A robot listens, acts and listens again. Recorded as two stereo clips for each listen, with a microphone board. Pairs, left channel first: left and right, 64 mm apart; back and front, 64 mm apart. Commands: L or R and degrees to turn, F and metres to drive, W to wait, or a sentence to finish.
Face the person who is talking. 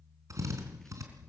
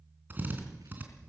W
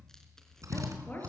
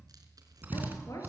L150
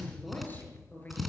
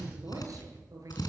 L30
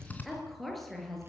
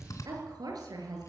Facing the woman speaking.